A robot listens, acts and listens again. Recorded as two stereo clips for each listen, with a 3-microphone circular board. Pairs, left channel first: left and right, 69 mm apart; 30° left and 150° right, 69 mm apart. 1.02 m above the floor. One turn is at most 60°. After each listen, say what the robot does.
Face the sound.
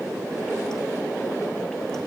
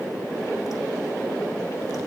Keep listening.
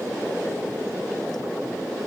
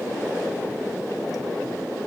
Keep listening.
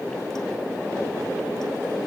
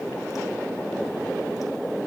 I can't make out anything.